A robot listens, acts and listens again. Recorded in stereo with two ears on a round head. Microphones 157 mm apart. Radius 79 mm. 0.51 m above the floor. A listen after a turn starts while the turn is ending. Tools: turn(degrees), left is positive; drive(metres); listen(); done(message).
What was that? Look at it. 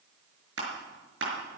turn(degrees=-90)
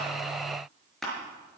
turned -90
done("Found it: crushing, straight ahead.")